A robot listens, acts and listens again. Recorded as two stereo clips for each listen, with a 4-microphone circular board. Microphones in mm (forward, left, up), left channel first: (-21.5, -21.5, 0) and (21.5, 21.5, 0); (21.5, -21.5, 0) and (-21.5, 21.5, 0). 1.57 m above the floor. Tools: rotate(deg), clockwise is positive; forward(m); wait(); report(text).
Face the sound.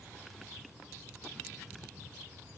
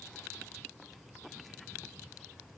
wait()
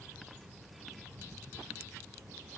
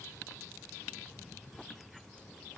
wait()
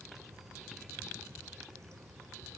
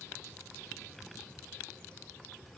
report("I can't make out anything.")